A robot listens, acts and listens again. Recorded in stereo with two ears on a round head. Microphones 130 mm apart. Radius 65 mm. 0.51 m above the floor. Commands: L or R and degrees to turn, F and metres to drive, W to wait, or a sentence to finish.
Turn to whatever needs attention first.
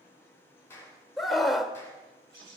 L30
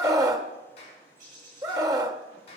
R30
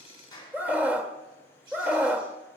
R15
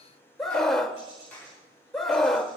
Facing the scream, 1 to 2 m away.